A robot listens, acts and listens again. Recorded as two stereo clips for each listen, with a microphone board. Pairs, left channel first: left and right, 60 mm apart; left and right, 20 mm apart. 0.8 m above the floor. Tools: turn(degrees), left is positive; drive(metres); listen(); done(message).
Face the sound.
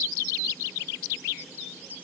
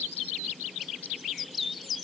listen()
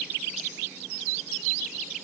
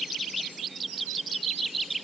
listen()
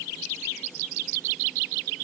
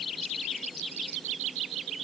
done("I can't make out anything.")